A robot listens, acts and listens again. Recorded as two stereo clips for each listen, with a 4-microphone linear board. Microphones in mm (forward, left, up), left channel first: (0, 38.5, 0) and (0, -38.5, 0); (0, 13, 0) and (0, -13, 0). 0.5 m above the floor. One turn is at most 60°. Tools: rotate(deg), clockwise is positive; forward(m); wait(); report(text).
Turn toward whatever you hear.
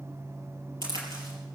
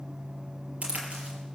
rotate(60)
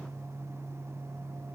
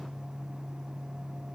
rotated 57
rotate(35)
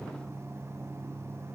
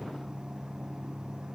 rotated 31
report("Facing where the crack came from. I can't hear it now.")